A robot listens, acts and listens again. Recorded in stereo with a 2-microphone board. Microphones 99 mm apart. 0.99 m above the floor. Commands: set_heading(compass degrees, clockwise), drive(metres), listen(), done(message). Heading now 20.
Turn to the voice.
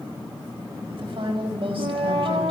set_heading(85)
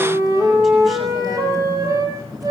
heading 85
listen()
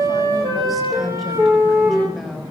done("Found it: a woman speaking, straight ahead, over 4 m away.")